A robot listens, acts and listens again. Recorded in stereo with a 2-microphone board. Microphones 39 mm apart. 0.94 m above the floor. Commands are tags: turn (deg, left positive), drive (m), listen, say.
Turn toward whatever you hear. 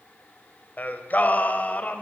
<turn deg="40"/>
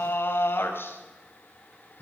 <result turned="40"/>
<turn deg="105"/>
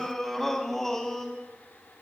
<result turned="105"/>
<turn deg="10"/>
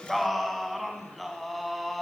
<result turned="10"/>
<say>Facing the singing.</say>